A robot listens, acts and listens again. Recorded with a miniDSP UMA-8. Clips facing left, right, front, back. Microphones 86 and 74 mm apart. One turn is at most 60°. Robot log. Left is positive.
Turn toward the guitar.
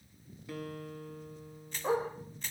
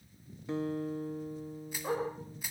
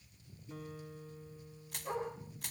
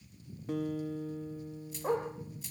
note: The guitar: 155° right.
cmd yaw -60
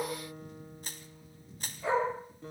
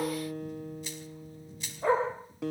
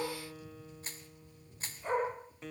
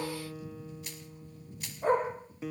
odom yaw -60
note: The guitar is now 95° right.
cmd yaw -60
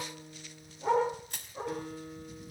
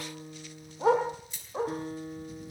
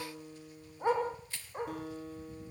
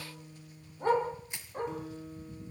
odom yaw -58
note: The guitar is now 35° right.
cmd yaw -35
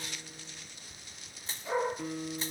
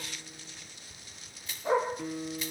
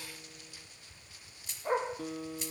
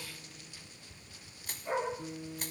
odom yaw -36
end: Found it: a guitar, straight ahead, 1 to 2 m away.